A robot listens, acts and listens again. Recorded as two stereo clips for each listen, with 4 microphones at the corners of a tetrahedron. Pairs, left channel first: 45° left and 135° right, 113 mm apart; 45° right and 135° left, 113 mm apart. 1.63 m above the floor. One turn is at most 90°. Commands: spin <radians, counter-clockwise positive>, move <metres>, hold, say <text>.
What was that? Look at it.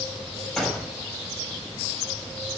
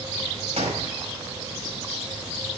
spin 1.57
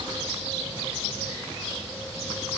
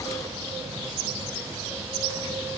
spin 0.70
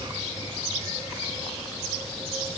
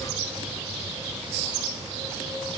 say Facing where the gunshot came from. I can't hear it now.